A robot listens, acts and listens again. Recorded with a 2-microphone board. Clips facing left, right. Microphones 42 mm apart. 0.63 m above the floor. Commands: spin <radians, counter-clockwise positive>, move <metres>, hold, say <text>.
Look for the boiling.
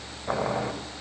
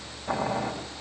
spin 0.35
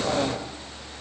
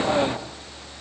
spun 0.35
hold
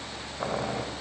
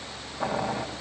say Found it: boiling, straight ahead.